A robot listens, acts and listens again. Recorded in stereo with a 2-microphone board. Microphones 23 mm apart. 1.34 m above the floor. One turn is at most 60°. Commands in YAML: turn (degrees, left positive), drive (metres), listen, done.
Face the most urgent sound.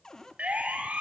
turn: -60
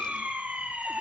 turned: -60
turn: -60
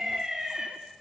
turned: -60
turn: -20
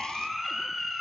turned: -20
done: "Facing the siren."